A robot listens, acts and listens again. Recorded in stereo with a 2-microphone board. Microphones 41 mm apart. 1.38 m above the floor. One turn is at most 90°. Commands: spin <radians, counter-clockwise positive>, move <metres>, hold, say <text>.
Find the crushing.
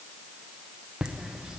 hold
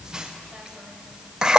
hold
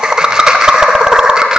say I can't make out crushing, only laughter.